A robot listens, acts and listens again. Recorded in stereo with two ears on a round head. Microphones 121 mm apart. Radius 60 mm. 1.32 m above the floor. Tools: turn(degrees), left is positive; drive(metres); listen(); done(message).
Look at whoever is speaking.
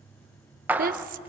turn(degrees=-65)
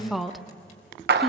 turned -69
done("Found it: a woman speaking, straight ahead.")